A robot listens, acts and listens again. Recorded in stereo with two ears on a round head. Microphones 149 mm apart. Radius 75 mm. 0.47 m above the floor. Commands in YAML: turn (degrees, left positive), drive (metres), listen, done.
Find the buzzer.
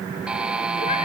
turn: -30
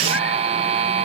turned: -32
turn: -140
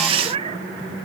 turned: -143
listen: true
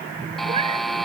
done: "Facing the buzzer."